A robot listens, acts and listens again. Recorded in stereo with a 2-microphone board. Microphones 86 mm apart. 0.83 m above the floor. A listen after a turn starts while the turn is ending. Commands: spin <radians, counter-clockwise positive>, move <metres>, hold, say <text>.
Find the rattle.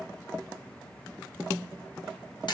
hold
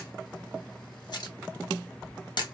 hold
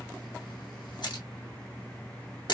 say I can't make out a rattle, only a camera shutter.